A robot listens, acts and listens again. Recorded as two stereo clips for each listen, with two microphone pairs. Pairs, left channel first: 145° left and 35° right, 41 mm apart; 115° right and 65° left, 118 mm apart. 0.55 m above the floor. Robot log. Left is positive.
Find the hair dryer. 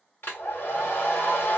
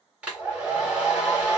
note: The hair dryer: 145° left.
cmd yaw +145
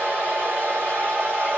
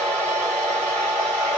note: The hair dryer is now 40° right.
cmd yaw -40
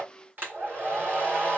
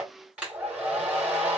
note: The hair dryer is now 15° right.
cmd yaw -15
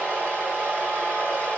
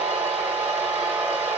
end: Facing the hair dryer.